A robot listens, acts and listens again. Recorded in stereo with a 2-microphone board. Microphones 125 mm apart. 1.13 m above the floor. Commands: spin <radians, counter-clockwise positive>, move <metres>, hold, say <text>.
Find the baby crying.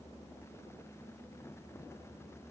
hold
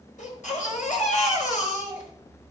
spin 1.57
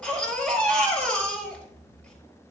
spin 0.17
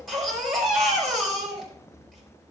say Facing the baby crying, over 4 m away.